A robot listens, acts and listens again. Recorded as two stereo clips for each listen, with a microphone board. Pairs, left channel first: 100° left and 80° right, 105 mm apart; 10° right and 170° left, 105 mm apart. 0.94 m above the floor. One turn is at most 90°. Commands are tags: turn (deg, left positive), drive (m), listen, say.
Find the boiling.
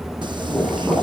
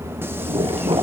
<turn deg="-90"/>
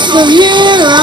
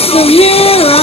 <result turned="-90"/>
<turn deg="-80"/>
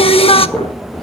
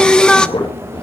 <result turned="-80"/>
<turn deg="20"/>
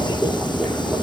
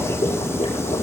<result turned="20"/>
<say>Facing the boiling.</say>